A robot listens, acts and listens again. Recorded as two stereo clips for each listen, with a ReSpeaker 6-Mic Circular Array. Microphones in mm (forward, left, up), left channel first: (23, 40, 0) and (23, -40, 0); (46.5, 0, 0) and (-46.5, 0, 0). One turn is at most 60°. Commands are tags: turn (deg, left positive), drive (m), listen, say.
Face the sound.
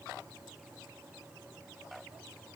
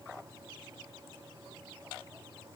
<listen/>
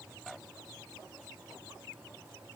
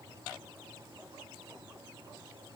<listen/>
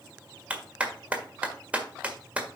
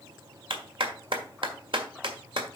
<turn deg="-60"/>
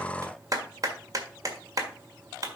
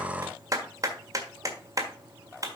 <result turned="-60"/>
<turn deg="-60"/>
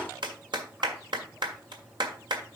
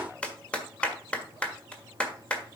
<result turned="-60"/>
<turn deg="-60"/>
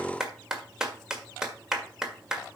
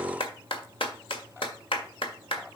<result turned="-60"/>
<say>Found it: a clap, straight ahead.</say>